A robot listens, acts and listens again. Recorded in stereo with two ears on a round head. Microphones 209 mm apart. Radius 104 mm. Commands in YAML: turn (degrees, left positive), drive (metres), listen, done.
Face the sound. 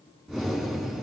turn: 30
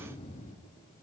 turn: 150
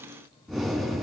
done: "Facing the breathing."